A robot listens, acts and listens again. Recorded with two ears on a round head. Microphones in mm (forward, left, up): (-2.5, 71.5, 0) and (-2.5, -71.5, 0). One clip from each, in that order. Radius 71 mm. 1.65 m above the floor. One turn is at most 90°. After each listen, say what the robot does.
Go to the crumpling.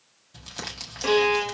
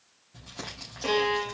Turn 90° left.
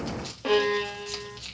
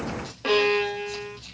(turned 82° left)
Turn 20° left.
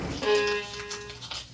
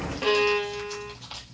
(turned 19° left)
Drive 1.0 m forward.
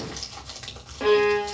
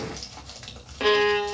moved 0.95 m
Drive 1.0 m forward.
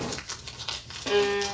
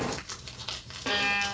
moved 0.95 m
Drive 1.0 m forward.
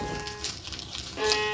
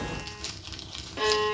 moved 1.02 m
Drive 1.0 m forward.
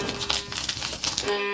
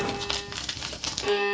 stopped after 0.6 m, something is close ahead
Turn 10° left.
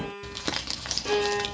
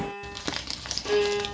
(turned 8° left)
Arrived at the crumpling, straight ahead.